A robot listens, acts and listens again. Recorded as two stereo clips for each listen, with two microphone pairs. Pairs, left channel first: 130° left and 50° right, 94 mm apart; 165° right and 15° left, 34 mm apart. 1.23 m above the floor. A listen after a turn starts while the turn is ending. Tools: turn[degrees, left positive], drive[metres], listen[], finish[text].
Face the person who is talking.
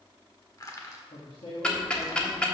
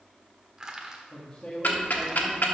Thought: The man speaking: 135° left.
Action: turn[135]
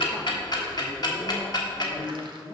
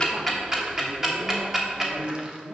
Thought: The man speaking is now 15° left.
Action: turn[15]
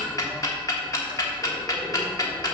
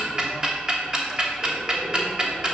Action: listen[]
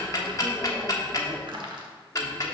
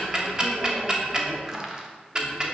Action: listen[]
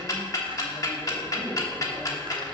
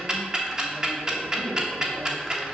Action: finish[I heard a man speaking from this way, but can't make it out now.]